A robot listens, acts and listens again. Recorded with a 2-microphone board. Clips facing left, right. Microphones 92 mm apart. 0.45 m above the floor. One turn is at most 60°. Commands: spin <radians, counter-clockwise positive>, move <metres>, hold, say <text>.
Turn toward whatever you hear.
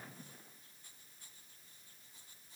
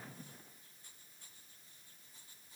hold
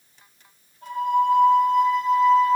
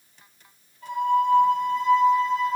spin 0.87
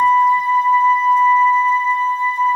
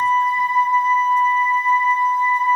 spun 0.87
spin 1.05
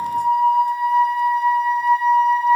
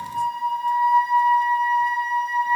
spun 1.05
spin 0.17
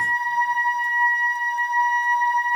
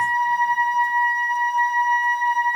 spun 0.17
say Facing the flute.